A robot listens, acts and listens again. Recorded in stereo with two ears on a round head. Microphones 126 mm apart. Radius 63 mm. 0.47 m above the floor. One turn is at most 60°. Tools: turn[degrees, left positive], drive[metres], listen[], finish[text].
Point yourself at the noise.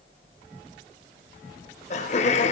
Thought: The laughter: about 50° left or 130° left.
Action: turn[50]
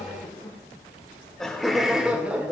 Thought: So it is at 10° right.
Action: turn[-10]
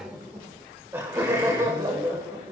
Thought: The laughter is now 25° right.
Action: turn[-25]
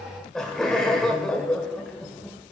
Action: finish[Found it: laughter, straight ahead, 1 to 2 m away.]